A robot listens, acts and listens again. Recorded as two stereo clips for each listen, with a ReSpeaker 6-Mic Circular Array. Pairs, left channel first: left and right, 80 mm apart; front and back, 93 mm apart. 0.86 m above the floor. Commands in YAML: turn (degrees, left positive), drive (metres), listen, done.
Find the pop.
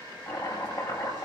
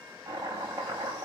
listen: true
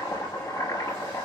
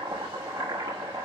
listen: true
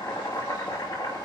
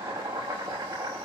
done: "I can't make out a pop, only chopping."